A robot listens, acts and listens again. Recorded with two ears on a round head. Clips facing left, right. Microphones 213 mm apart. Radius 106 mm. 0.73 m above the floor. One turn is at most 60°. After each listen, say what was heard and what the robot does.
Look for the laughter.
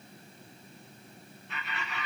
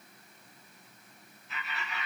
Turn 30° left.
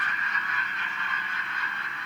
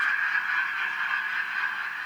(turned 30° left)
So it is at 135° left. Turn 60° left.
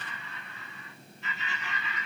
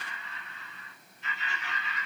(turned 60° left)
The laughter is now 70° left. Turn 60° left.
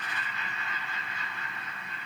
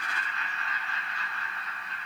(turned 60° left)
The laughter is now 15° left. Turn 15° left.
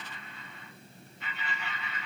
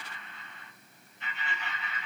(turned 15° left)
Facing the laughter, 2 to 4 m away.